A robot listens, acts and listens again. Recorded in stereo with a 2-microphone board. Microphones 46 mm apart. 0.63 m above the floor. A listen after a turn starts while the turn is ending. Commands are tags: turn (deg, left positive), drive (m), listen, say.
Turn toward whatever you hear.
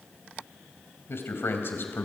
<turn deg="50"/>
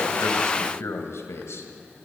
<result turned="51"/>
<turn deg="75"/>
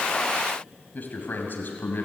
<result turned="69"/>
<turn deg="50"/>
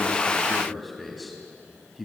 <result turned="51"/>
<say>Facing the man speaking, 2 to 4 m away.</say>